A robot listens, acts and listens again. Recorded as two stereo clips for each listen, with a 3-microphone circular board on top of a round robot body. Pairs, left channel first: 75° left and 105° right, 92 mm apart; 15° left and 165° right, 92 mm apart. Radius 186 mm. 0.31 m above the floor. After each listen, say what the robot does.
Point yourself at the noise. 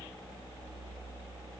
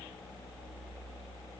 Keep listening.
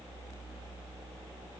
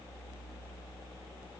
Keep listening.
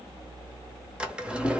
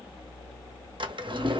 Turn 175° left.
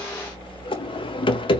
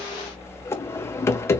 Turn 75° left.
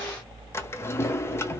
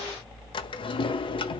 Turn 15° left.
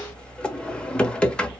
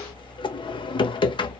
Found it: a drawer, straight ahead, 1 to 2 m away.